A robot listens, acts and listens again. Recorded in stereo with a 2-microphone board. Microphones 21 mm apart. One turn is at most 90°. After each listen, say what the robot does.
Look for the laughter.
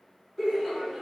Turn 30° left.
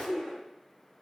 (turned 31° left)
Turn 90° left.
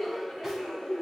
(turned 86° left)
Turn 55° left.
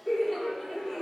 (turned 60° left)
Found it: laughter, straight ahead.